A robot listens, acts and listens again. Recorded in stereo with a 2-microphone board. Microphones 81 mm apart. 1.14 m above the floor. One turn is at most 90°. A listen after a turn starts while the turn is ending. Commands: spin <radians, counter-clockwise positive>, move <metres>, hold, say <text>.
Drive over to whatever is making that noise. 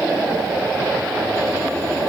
hold
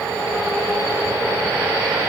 hold
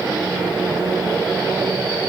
say I can't make out anything.